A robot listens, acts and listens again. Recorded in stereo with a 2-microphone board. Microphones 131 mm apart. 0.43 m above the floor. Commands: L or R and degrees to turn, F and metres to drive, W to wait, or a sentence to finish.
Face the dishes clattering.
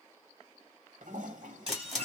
R45
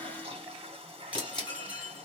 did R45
R15
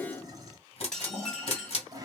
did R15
Facing the dishes clattering, 1 to 2 m away.